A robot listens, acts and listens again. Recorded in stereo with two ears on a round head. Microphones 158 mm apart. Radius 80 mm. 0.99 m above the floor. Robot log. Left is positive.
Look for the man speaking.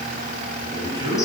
note: The man speaking: about 30° right or 150° right.
cmd yaw -30
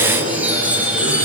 note: So it is at 125° right.
cmd yaw -125
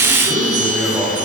note: The man speaking is now 10° right.
cmd yaw -10
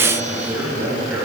note: The man speaking is now 10° right.
cmd yaw -10
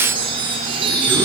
cmd idle
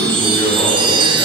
cmd idle
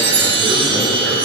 end: I heard a man speaking from this way, but can't make it out now.